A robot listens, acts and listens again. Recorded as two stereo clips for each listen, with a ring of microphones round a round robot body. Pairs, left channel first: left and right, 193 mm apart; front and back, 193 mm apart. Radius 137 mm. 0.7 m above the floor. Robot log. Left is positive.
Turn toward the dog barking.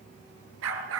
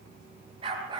note: The dog barking: 105° right.
cmd yaw -105
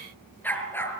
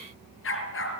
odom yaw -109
note: The dog barking is now 10° left.
cmd yaw +10
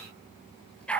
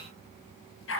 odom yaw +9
end: Facing the dog barking.